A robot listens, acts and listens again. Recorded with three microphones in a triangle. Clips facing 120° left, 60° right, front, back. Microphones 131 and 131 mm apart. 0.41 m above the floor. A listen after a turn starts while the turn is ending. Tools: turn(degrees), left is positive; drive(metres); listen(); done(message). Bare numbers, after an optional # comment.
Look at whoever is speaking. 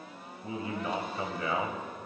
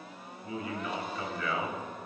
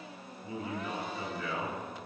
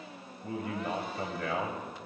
# The man speaking: 175° left.
turn(175)
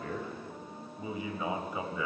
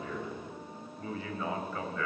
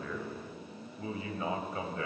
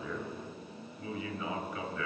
# The man speaking is now 50° left.
turn(50)
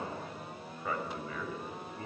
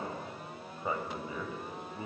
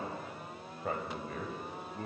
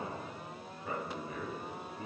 done("Found it: a man speaking, straight ahead, 2 to 4 m away.")